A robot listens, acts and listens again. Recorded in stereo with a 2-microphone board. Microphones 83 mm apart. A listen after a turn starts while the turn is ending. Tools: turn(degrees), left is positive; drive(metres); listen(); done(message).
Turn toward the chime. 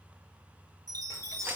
turn(degrees=-45)
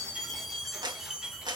done("Found it: a chime, straight ahead, 1 to 2 m away.")